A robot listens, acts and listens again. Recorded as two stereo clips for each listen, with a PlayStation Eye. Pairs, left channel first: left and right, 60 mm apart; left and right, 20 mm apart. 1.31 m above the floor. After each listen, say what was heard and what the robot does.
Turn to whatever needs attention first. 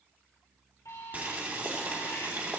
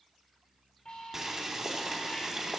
The alarm: about 65° left or 115° left. Turn 65° left.
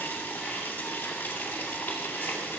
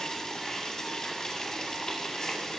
Keep listening.
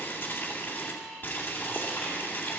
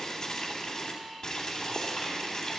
Facing the alarm.